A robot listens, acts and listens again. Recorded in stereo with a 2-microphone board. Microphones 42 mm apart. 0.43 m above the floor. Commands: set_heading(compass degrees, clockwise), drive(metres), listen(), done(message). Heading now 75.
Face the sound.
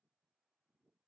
listen()
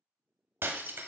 set_heading(150)
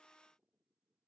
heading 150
listen()
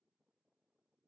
done("I heard breaking glass, but can't make it out now. It was about straight ahead or 30° right.")